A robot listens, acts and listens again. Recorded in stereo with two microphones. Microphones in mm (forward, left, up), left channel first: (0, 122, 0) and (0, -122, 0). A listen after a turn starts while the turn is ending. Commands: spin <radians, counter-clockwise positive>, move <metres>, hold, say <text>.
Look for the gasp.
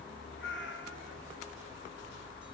hold
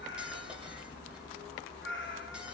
hold
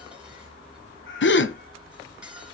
spin 0.87
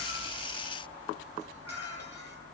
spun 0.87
hold
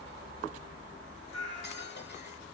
say I heard a gasp, but can't make it out now. It was about straight ahead or 80° left.